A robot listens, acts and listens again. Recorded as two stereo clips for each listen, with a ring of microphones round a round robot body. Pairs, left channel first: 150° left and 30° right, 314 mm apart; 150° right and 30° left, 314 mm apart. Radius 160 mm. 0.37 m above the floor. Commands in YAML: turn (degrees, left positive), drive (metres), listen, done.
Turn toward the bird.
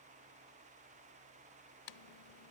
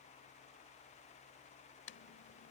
listen: true
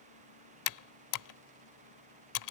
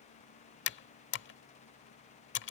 listen: true
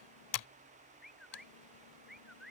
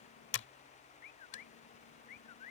turn: -120
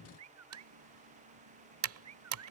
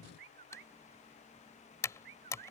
turn: 10
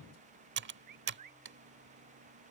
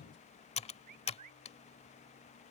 done: "Facing the bird."